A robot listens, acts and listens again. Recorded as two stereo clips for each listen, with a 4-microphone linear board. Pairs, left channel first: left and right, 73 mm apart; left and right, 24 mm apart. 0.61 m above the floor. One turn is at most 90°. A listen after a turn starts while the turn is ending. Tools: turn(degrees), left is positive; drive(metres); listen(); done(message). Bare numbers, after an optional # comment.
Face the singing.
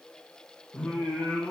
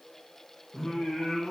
turn(30)
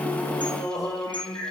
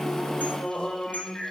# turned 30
# So it is at 140° left.
turn(90)
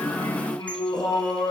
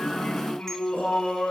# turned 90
# The singing is now 70° left.
turn(70)
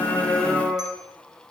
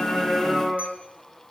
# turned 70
done("Found it: singing, straight ahead, over 4 m away.")